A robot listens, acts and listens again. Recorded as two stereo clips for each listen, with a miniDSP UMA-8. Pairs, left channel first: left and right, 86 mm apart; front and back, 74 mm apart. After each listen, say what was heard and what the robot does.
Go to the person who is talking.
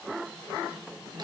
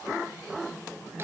Keep listening.
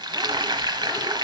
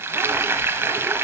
Keep listening.
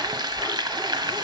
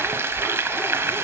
I can't make out anyone speaking to turn to.